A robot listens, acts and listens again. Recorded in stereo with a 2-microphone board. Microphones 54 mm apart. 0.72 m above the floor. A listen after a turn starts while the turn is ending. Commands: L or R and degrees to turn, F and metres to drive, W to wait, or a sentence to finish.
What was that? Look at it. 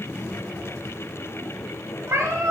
R75
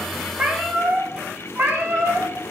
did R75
R40
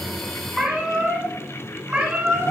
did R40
R20
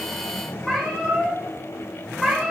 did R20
Found it: a cat meowing, straight ahead, 2 to 4 m away.